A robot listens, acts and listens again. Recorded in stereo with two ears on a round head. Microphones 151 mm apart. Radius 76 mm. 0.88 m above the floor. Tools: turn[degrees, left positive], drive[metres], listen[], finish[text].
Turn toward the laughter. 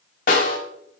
Action: listen[]
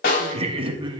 Thought: The laughter: about 30° right or 150° right.
Action: turn[-30]
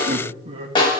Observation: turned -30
Thought: The laughter: about 35° right or 145° right.
Action: turn[-35]
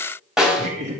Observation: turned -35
Thought: So it is at 135° right.
Action: turn[-135]
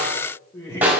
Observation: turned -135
Thought: The laughter is now 20° left.
Action: turn[20]
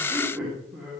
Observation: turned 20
Thought: The laughter is now 10° right.
Action: turn[-10]
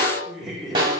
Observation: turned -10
Action: finish[Found it: laughter, straight ahead.]